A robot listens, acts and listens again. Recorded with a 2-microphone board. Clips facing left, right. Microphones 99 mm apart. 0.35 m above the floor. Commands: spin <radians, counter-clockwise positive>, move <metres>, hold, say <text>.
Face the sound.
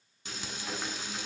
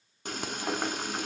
spin -0.87
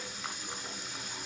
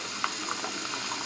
spin -1.40
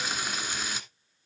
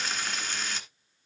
spin 0.17
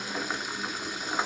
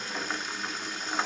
say Facing the frying.